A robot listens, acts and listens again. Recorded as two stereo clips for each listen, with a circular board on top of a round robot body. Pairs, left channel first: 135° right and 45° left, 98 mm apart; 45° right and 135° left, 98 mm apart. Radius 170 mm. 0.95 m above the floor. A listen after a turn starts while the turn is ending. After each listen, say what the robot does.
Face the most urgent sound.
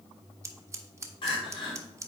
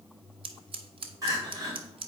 Turn 170° right.
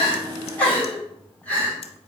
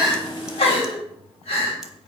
Turn 60° right.
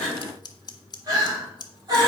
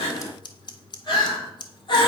Found it: crying, straight ahead.